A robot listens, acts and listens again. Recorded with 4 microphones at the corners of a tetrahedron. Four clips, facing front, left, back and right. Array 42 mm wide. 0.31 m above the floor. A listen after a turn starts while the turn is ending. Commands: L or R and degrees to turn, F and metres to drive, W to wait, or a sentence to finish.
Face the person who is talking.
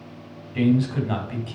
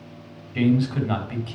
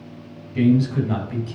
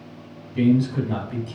L55
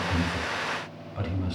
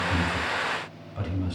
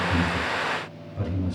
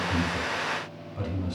L10
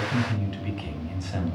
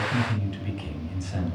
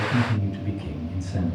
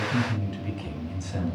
Found it: a man speaking, straight ahead.